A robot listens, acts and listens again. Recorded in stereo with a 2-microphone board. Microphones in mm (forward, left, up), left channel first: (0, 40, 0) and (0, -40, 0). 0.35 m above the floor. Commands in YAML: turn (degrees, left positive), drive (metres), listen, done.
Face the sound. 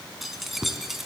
turn: -30
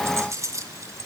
turn: -140
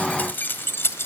turn: 30
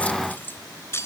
turn: 35
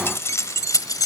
turn: 50
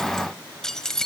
done: "Found it: keys jangling, straight ahead."